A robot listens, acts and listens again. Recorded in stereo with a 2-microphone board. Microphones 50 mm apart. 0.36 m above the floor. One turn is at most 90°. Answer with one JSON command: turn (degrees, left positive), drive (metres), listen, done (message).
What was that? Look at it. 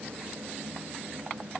{"listen": true}
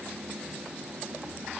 {"listen": true}
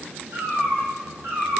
{"turn": -60}
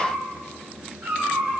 {"turn": -70}
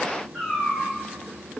{"done": "Found it: a cat meowing, straight ahead, over 4 m away."}